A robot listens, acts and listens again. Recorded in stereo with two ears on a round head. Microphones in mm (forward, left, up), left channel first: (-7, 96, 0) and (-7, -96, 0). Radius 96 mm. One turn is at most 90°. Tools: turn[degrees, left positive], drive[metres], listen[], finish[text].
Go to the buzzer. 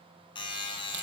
Thought: The buzzer: about 25° left or 155° left.
Action: turn[25]
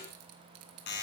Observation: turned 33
Thought: So it is at 125° left.
Action: turn[90]
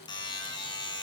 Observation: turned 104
Thought: The buzzer is now 20° left.
Action: turn[20]
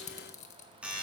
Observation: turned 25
Action: drive[1.0]
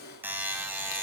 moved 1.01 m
Thought: The buzzer is now 10° right.
Action: turn[-10]
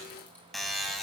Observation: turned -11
Action: drive[1.0]
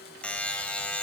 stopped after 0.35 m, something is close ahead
Action: finish[Arrived at the buzzer, straight ahead.]